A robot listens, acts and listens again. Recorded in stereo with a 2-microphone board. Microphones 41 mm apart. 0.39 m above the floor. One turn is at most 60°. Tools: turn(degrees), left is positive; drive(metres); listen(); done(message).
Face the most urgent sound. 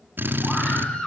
turn(degrees=25)
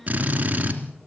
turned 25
listen()
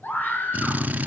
turn(degrees=60)
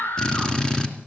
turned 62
turn(degrees=60)
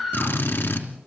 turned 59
done("Facing the scream, over 4 m away.")